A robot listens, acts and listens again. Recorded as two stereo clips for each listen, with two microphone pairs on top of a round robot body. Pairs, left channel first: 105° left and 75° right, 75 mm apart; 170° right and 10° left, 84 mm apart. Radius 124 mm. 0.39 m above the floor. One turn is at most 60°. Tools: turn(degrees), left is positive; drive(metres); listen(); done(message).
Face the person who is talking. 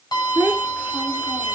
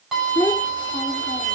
turn(degrees=-60)
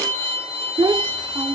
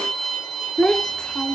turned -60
turn(degrees=-60)
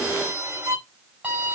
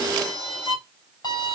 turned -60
turn(degrees=-30)
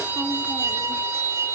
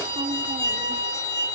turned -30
listen()
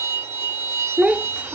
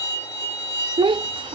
done("Facing the child speaking.")